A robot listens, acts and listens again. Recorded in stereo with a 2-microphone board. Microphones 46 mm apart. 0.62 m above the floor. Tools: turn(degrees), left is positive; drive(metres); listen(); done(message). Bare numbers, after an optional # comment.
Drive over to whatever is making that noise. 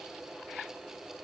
listen()
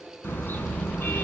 # The car horn: about 50° left or 130° left.
turn(50)
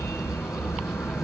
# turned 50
# So it is at 80° left.
turn(80)
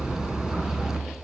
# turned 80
# The car horn is now 15° right.
turn(-15)
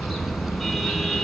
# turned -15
drive(1.0)
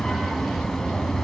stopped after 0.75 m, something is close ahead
# The car horn is now 10° left.
turn(10)
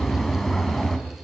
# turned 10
done("Something is in my way. I am facing the car horn but have not reached it.")